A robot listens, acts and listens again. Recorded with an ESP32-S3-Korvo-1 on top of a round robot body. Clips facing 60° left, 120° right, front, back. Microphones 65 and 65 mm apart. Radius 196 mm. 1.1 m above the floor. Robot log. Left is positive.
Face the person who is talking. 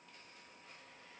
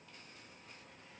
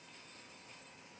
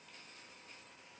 cmd idle
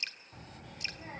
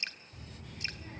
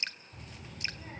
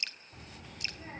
note: The child speaking: 120° left.
cmd yaw +120
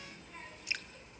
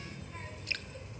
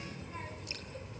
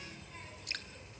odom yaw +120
note: The child speaking is now 30° right.
cmd yaw -30
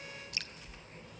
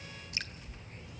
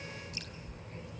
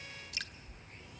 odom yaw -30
note: The child speaking is now 10° left.
cmd yaw +10
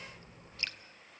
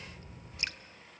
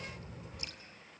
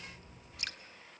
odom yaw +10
end: Found it: a child speaking, straight ahead.